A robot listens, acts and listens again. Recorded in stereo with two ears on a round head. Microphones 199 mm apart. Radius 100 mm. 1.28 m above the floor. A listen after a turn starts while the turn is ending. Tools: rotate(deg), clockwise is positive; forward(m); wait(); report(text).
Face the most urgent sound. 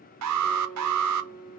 rotate(90)
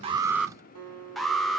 report("Found it: an alarm, straight ahead, 1 to 2 m away.")